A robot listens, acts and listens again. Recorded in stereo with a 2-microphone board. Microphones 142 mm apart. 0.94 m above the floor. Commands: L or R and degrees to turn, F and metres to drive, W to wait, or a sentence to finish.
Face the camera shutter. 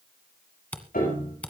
L30
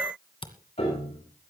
L140
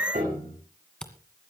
Found it: a camera shutter, straight ahead.